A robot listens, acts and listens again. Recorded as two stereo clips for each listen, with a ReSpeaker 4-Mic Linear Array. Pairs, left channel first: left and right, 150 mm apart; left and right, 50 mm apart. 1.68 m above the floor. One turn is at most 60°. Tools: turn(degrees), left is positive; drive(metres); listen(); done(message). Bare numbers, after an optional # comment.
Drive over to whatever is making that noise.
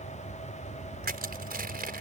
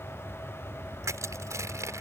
turn(-60)
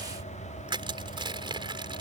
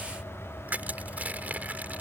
# So it is at 35° right.
turn(-35)
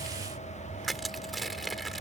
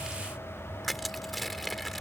drive(1.0)
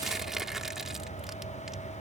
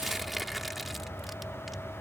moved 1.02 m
drive(1.0)
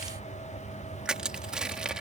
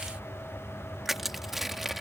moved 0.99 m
drive(1.0)
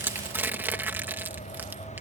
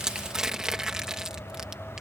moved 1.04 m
# The crushing is now 15° right.
turn(-15)
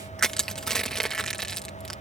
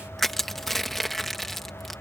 drive(1.0)
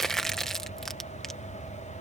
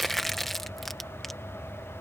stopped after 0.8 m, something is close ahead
done("Arrived at the crushing, straight ahead.")